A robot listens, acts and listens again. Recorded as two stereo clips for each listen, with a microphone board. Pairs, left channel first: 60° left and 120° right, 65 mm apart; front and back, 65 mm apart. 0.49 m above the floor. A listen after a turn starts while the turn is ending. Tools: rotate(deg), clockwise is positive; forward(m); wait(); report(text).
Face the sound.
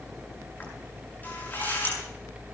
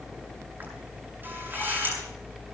rotate(-120)
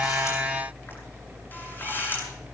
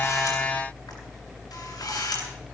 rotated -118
report("Found it: a camera shutter, straight ahead, over 4 m away.")